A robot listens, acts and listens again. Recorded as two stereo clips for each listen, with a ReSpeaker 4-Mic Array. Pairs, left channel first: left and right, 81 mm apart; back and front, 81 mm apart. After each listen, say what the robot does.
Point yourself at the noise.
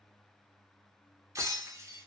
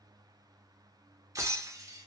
Turn 45° right.
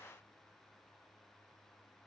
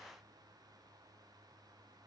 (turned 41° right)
I heard breaking glass from this way, but can't make it out now.